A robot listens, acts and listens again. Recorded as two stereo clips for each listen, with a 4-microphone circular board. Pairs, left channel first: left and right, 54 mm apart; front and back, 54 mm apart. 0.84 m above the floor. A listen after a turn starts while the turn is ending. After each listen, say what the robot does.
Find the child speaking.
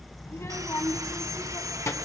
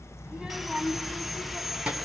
Turn 110° left.
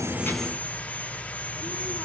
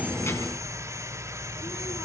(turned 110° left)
Keep listening.
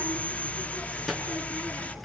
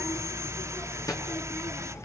Facing the child speaking.